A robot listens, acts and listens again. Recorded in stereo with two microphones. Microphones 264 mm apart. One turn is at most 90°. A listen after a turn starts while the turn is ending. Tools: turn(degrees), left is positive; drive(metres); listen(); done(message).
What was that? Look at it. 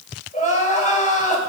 turn(degrees=25)
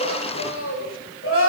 turn(degrees=90)
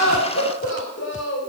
turn(degrees=50)
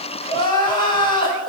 turn(degrees=15)
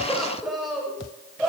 done("Facing the crying, over 4 m away.")